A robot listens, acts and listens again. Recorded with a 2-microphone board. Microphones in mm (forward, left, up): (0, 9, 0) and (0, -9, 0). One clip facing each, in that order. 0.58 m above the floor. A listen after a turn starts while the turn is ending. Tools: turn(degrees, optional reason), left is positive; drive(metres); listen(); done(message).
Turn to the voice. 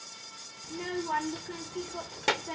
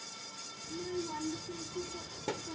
turn(degrees=75, reason="The child speaking: about 75° left or 105° left.")
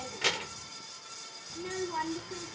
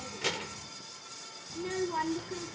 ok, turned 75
done("Found it: a child speaking, straight ahead.")